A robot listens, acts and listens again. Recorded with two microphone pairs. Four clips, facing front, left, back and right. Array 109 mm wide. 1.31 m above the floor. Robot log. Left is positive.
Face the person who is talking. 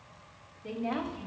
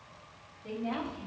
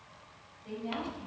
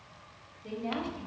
note: The woman speaking: 15° right.
cmd yaw -15
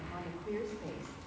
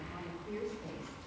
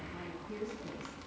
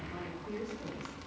note: The woman speaking is now 15° right.
cmd yaw -15
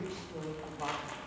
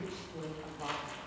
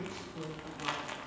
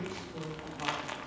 note: The woman speaking is now 15° right.
cmd yaw -15
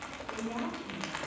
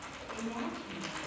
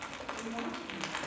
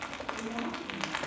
end: Found it: a woman speaking, straight ahead, over 4 m away.